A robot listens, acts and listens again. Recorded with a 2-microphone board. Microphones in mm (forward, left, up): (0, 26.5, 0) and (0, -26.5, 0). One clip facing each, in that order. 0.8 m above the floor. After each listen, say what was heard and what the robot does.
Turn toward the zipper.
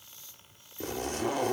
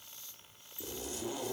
The zipper: about 60° left or 120° left. Turn 60° left.
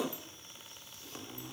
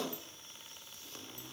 So it is at 15° left. Turn 15° left.
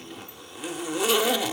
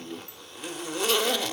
Found it: a zipper, straight ahead, under 1 m away.